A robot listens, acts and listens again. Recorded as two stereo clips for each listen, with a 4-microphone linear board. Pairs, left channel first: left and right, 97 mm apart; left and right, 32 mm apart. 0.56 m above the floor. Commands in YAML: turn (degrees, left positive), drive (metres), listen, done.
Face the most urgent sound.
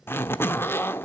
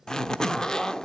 listen: true
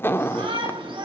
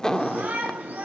turn: -60
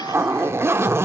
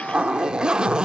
listen: true
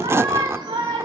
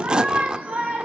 turn: -55
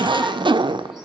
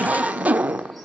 done: "Found it: a shout, straight ahead."